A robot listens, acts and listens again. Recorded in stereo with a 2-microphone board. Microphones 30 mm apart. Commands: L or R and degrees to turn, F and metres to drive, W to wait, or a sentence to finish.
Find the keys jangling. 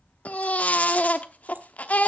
W
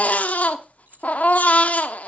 R75
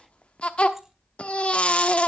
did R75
W
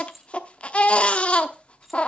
Facing the keys jangling.